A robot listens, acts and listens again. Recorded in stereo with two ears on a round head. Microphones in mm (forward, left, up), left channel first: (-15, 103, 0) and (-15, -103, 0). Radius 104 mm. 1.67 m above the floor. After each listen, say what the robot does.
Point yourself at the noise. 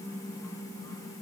Keep listening.
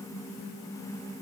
Keep listening.
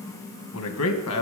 Turn 65° left.
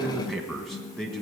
Found it: a man speaking, straight ahead.